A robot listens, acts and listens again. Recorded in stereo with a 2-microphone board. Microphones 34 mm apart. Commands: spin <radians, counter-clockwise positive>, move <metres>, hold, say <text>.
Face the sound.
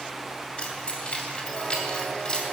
spin 0.35
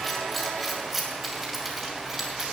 spin -0.26
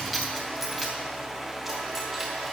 spin -0.17
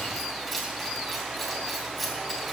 say Found it: keys jangling, straight ahead, 2 to 4 m away.